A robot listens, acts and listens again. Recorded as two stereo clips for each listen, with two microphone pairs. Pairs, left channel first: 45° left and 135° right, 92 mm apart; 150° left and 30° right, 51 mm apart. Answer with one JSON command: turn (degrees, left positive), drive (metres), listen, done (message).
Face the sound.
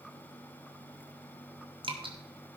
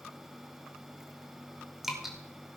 {"turn": -115}
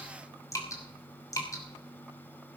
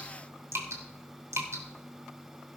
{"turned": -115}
{"turn": -10}
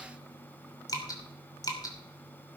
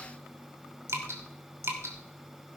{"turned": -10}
{"done": "Facing the dripping, 2 to 4 m away."}